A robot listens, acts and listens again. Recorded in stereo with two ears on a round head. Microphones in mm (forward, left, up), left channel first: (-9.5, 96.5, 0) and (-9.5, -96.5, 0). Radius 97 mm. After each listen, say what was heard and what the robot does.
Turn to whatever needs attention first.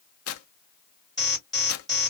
Turn 30° left.
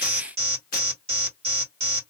So it is at 30° right. Turn 30° right.
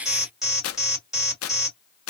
Facing the alarm, 2 to 4 m away.